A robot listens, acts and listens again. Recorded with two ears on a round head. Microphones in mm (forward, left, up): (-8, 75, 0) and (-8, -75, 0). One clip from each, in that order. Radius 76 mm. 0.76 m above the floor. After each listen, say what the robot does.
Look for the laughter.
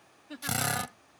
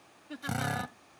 Turn 30° left.
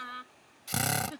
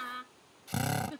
Turn 20° left.
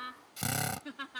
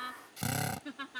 Turn 30° left.
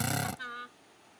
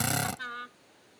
Found it: laughter, straight ahead.